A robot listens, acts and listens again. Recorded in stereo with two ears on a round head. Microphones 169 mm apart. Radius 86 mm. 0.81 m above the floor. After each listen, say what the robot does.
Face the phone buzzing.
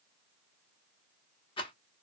Keep listening.
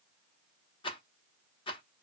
Keep listening.
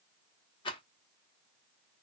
I can't make out a phone buzzing to turn to.